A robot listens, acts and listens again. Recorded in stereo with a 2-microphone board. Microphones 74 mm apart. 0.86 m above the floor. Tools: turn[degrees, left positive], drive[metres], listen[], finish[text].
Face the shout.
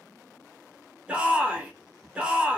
Action: turn[-30]
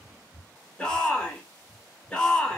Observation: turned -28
Thought: So it is at 15° left.
Action: turn[15]
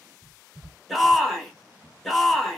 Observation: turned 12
Action: finish[Facing the shout.]